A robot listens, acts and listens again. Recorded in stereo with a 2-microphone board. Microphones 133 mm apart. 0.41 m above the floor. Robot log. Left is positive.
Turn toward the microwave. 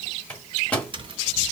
cmd yaw +30
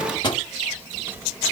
note: So it is at 140° left.
cmd yaw +140
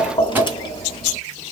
cmd idle
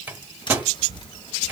note: The microwave is now 15° right.
cmd yaw -15
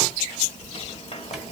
cmd idle
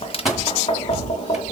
end: Facing the microwave, 1 to 2 m away.